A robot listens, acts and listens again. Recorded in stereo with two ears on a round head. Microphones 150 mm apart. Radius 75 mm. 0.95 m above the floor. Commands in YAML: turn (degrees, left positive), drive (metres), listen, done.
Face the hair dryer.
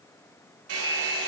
turn: -90
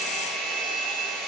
done: "Found it: a hair dryer, straight ahead, over 4 m away."